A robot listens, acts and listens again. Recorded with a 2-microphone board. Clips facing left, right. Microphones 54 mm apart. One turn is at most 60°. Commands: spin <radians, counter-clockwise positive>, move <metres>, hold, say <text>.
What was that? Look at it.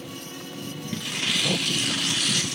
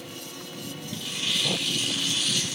spin 1.05
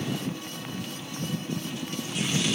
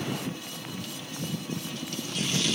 spin 0.52
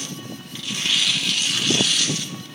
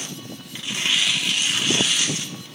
spin -0.35
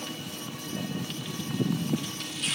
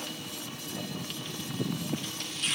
say Found it: tearing paper, straight ahead.